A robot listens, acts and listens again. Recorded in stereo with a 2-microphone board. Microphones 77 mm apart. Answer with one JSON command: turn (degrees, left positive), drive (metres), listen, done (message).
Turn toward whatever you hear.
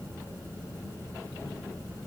{"listen": true}
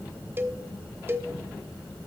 {"turn": -30}
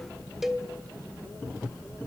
{"done": "Found it: a cowbell, straight ahead, 1 to 2 m away."}